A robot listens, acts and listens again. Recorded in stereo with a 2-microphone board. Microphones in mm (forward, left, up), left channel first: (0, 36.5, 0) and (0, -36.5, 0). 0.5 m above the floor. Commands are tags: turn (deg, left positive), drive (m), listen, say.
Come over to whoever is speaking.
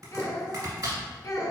<turn deg="55"/>
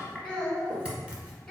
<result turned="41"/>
<turn deg="15"/>
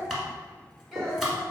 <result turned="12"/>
<drive m="1.0"/>
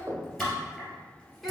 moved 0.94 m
<listen/>
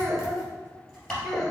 <drive m="1.0"/>
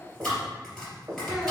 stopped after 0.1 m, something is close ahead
<listen/>
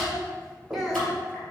<say>Arrived at the child speaking, straight ahead.</say>